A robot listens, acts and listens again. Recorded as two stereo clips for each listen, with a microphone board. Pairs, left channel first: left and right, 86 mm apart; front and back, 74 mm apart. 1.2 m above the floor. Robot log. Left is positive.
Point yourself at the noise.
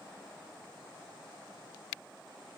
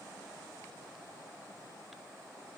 cmd idle
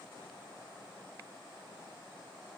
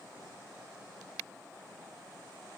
cmd idle
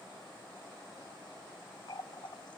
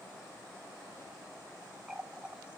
note: The running tap: 105° left.
cmd yaw +105
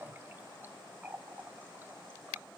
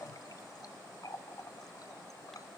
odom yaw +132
note: The running tap is now 25° right.
cmd yaw -25
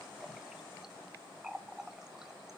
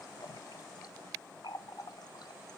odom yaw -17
end: Found it: a running tap, straight ahead, under 1 m away.